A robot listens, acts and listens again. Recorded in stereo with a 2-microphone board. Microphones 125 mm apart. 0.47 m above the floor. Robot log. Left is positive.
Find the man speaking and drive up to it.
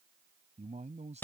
note: The man speaking: about 65° right or 115° right.
cmd yaw -65
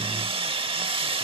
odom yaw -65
cmd idle
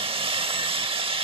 cmd idle
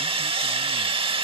end: I heard a man speaking, but can't make it out now. It was about straight ahead or 50° right. I did not reach it.